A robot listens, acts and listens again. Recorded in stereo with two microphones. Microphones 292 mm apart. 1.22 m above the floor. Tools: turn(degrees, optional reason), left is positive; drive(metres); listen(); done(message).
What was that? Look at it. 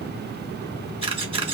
turn(degrees=-20, reason="The camera shutter: about 20° right or 160° right.")
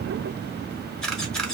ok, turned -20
done("Facing the camera shutter.")